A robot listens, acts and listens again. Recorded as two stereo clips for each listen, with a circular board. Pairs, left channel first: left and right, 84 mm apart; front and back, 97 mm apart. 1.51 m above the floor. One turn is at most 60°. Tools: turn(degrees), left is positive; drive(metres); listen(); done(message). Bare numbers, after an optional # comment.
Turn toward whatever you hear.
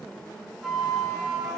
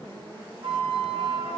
# The flute: 175° right.
turn(-60)
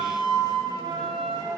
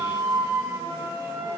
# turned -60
# The flute is now 120° right.
turn(-60)
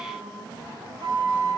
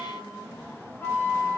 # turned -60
# The flute is now 65° right.
turn(-60)
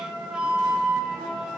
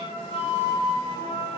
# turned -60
# The flute is now 10° right.
turn(-10)
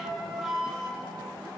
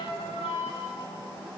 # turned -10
done("Facing the flute, 2 to 4 m away.")